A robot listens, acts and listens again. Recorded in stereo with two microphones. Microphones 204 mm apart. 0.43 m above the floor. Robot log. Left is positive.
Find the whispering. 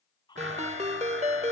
note: The whispering: about 20° left or 160° left.
cmd yaw +20
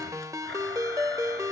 cmd idle
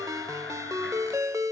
cmd idle
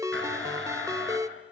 end: I heard whispering, but can't make it out now. It was about straight ahead or 140° left.